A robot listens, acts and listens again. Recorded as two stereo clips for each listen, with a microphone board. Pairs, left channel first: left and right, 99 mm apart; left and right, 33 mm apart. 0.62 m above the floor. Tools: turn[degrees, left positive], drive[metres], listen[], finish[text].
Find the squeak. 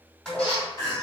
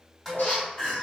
Action: turn[90]
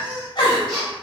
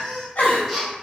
Action: finish[Facing the squeak.]